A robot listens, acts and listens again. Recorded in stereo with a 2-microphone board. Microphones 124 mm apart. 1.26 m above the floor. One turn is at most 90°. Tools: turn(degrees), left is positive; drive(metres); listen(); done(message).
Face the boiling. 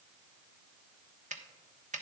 listen()
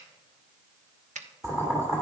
turn(degrees=-25)
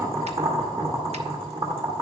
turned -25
turn(degrees=-90)
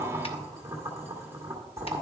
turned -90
turn(degrees=-20)
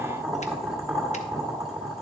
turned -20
done("Facing the boiling.")